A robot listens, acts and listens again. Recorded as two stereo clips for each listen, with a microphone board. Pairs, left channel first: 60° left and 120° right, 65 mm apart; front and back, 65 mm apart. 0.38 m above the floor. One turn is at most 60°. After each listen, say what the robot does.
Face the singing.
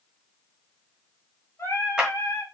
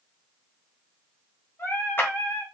Turn 40° left.
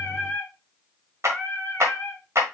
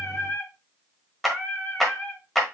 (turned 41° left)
Turn 45° left.
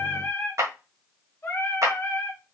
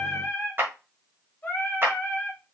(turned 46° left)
Turn 40° left.
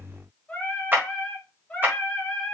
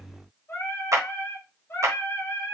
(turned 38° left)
Facing the singing.